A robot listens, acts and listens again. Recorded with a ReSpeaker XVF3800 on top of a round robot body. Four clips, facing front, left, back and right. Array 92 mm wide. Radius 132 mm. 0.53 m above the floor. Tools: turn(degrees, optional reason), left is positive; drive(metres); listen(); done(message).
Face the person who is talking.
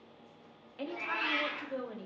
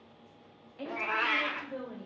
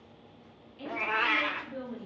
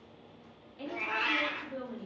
turn(degrees=15, reason="The woman speaking: 15° left.")
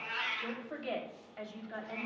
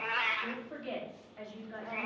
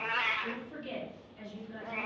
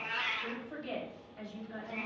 done("Found it: a woman speaking, straight ahead.")